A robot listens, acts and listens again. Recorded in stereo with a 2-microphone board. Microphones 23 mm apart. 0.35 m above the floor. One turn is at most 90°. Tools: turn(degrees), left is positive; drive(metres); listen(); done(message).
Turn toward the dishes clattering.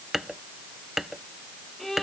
turn(degrees=-30)
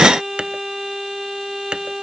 turn(degrees=-90)
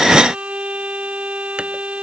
turn(degrees=-45)
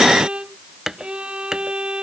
turn(degrees=-25)
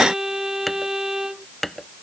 done("Found it: dishes clattering, straight ahead.")